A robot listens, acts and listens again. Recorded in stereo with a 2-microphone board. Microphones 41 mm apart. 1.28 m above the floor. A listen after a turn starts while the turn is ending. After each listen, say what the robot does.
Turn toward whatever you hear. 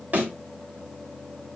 Turn 45° right.
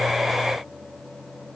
Keep listening.
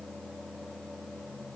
I heard a thud, but can't make it out now. It was about straight ahead or 90° right.